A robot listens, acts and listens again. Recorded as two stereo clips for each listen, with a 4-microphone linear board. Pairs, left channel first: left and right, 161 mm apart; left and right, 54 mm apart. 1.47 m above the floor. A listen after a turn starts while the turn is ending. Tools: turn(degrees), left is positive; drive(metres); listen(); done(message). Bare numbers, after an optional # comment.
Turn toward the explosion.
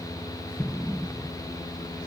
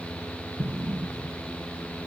turn(30)
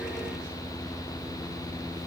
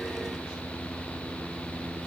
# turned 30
listen()
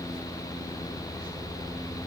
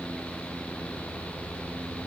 done("I heard an explosion, but can't make it out now. It was about 30° right or 150° left.")